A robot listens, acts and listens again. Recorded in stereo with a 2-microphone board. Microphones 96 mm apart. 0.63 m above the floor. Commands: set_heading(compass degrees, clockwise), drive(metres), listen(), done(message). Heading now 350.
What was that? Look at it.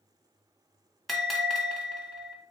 set_heading(320)
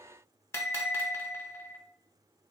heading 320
set_heading(170)
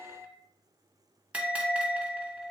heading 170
set_heading(185)
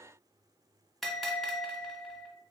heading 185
done("Found it: a bell, straight ahead.")